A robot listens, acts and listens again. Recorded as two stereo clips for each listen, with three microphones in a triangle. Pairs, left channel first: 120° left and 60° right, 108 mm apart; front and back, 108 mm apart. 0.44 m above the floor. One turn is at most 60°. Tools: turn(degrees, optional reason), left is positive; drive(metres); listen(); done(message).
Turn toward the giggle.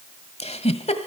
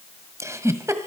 turn(degrees=60, reason="The giggle: 115° left.")
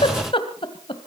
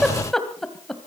turn(degrees=60, reason="The giggle is now 85° left.")
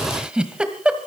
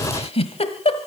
turn(degrees=20, reason="The giggle is now 20° left.")
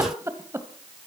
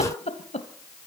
done("Found it: a giggle, straight ahead.")